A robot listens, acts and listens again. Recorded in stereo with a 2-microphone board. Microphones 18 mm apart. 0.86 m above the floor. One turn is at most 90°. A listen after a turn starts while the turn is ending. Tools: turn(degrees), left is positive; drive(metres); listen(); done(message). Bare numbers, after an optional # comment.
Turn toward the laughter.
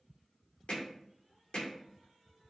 listen()
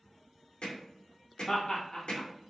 # The laughter: about 45° left or 135° left.
turn(45)
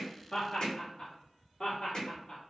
# So it is at 30° left.
turn(30)
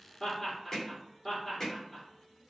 done("Found it: laughter, straight ahead.")